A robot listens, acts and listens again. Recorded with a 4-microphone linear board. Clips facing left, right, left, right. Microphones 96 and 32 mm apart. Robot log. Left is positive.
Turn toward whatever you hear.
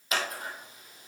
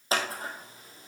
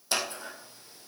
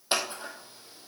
note: The scissors: about 35° right or 145° right.
cmd yaw -35
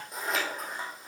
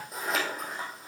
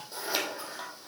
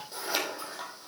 end: Found it: scissors, straight ahead, 1 to 2 m away.